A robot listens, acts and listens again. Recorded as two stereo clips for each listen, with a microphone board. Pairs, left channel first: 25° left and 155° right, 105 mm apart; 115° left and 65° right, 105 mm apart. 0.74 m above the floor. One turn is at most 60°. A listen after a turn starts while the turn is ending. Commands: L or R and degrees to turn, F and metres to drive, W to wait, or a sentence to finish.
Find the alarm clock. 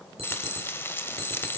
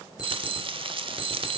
R60
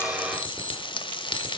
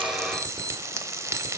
R60
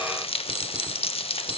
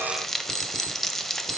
R50
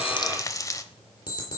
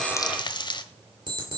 R25
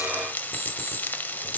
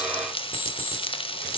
R10
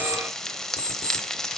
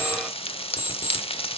Facing the alarm clock.